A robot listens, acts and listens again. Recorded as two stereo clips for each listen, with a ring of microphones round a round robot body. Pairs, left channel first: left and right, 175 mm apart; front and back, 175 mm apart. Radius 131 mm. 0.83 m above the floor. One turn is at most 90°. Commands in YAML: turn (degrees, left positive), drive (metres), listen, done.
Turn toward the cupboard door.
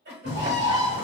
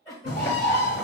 turn: 50
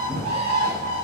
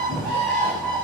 done: "Facing the cupboard door."